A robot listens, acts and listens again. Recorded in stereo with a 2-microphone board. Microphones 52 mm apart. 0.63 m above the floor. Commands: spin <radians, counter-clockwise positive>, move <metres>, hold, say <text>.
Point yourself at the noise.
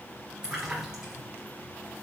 spin -0.52
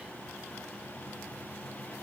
hold
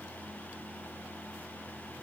say I heard a splash, but can't make it out now. It was about 20° left or 140° right.